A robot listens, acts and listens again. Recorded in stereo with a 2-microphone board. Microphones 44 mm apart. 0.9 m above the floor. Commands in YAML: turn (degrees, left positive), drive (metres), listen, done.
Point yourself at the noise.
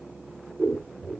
turn: -30
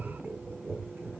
turn: -145
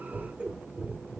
turn: -25
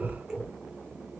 turn: -15
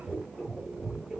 done: "Facing the scissors."